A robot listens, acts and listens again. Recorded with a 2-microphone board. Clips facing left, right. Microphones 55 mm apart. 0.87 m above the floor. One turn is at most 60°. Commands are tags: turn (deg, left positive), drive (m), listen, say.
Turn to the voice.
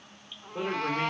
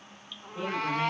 <turn deg="60"/>
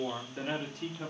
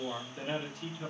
<turn deg="50"/>
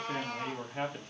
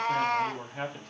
<turn deg="25"/>
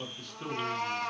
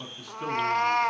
<turn deg="-10"/>
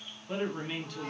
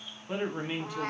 <turn deg="-15"/>
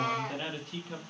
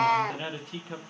<turn deg="-10"/>
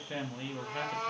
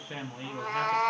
<say>Found it: a man speaking, straight ahead.</say>